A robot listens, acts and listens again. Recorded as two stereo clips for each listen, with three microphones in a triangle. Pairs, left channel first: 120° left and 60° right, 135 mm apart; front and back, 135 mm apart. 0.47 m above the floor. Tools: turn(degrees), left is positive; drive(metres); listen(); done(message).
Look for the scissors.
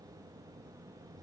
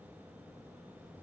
listen()
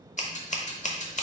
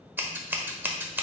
turn(degrees=105)
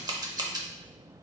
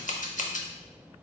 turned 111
done("Found it: scissors, straight ahead, under 1 m away.")